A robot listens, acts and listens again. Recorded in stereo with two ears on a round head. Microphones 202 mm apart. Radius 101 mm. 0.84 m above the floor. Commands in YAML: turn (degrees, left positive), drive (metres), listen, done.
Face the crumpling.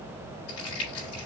turn: 75
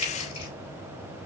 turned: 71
turn: 25
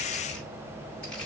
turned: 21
done: "Found it: crumpling, straight ahead, 2 to 4 m away."